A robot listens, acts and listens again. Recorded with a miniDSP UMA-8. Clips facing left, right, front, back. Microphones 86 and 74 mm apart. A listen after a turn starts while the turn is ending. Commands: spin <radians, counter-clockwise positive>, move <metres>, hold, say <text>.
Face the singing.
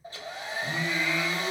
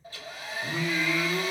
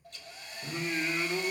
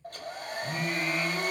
say Facing the singing.